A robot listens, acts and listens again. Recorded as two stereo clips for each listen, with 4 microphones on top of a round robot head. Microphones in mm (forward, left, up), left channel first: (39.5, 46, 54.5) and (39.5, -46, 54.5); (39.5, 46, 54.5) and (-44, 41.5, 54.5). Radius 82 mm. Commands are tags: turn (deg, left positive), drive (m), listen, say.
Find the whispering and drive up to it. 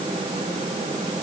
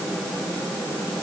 <listen/>
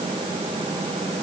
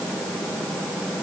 <listen/>
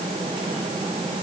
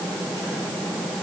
<say>I can't make out whispering.</say>